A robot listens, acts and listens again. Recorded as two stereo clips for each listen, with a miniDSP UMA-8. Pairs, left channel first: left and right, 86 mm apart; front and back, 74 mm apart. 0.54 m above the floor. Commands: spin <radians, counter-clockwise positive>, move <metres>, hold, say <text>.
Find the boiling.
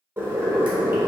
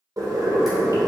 spin -2.62
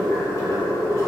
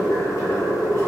spin 0.70
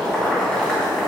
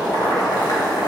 spin 0.26
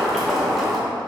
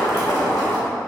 say Facing the boiling, under 1 m away.